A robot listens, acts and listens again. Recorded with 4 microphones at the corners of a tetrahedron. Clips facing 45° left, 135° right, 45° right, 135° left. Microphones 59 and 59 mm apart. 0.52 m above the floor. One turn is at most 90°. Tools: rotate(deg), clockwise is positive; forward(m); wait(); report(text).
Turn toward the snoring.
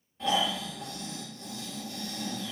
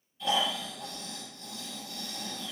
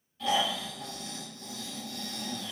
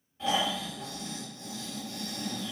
rotate(-75)
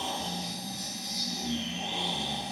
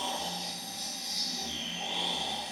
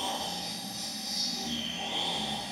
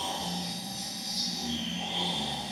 report("Found it: snoring, straight ahead, 1 to 2 m away.")